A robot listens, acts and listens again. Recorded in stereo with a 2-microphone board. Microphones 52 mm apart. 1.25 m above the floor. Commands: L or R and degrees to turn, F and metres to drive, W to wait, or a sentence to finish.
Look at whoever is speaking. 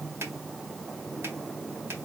W
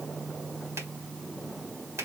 W
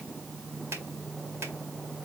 I can't make out anyone speaking to turn to.